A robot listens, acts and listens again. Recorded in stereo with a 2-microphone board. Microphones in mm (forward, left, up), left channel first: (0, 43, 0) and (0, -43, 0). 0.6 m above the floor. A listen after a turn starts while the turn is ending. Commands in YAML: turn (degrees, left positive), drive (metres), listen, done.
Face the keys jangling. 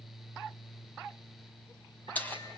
turn: 20
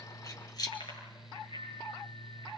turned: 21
turn: 130
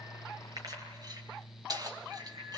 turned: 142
turn: -50
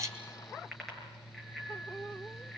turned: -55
listen: true
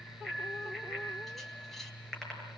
listen: true
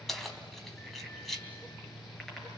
done: "Found it: keys jangling, straight ahead, 2 to 4 m away."